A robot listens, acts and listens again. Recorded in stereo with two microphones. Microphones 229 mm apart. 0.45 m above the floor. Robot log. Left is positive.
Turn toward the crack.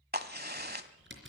note: The crack: about 45° right or 135° right.
cmd yaw -45
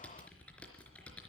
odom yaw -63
cmd idle
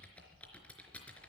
end: I heard a crack, but can't make it out now. It was about 20° left or 75° right.